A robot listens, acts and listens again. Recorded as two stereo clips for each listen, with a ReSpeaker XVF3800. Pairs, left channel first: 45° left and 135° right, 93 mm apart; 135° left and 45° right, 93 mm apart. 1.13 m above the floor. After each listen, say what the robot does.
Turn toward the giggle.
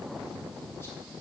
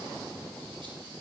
Keep listening.
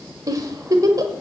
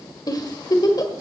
Turn 180° left.
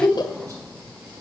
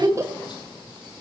Turn 10° left.
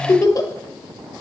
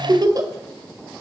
Facing the giggle.